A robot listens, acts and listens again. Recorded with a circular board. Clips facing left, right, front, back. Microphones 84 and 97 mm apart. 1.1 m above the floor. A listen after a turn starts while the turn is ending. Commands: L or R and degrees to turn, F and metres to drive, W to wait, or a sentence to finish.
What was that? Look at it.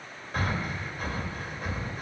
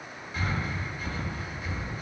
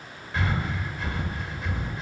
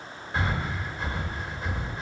L125
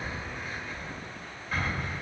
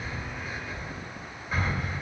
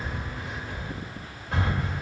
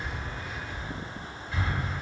Found it: breathing, straight ahead.